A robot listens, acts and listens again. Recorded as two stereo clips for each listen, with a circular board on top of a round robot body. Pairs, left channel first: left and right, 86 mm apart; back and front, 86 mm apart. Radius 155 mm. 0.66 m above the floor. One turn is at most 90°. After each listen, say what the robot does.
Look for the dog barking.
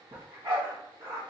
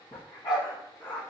Turn 90° right.
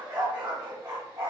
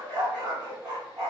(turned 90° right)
Turn 45° right.
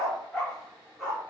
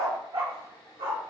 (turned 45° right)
Facing the dog barking.